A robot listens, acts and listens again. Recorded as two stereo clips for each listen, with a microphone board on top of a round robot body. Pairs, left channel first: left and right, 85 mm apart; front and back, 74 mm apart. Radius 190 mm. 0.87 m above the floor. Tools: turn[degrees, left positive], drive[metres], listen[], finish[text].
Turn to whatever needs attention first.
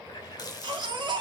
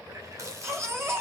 Thought: The baby crying: 125° right.
Action: turn[-125]
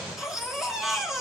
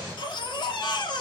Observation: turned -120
Action: finish[Facing the baby crying, 2 to 4 m away.]